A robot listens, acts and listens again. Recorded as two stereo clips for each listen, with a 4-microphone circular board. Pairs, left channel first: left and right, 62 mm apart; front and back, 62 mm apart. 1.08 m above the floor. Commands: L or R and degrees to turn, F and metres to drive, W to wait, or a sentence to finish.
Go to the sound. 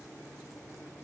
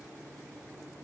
W
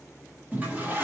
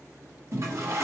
R150
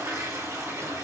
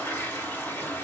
R60
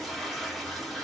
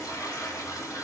F1.0
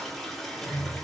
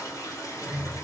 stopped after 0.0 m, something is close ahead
Something is in my way. I am facing the toilet flushing but have not reached it.